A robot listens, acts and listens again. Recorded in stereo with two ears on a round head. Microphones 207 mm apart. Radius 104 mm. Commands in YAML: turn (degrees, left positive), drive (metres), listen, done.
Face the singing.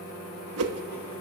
listen: true
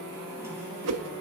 listen: true
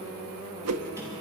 done: "I can't make out singing to turn to."